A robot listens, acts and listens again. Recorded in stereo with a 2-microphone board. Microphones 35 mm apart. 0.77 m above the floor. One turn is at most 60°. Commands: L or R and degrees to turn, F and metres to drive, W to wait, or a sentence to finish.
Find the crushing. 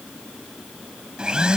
W
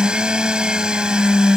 W
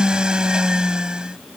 I can't make out crushing to turn to.